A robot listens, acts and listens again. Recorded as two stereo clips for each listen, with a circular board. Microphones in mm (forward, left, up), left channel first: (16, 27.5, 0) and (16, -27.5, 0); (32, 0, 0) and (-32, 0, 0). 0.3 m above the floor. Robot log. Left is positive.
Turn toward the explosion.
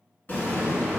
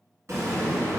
note: The explosion: 140° left.
cmd yaw +140
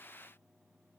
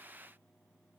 end: I heard an explosion from this way, but can't make it out now.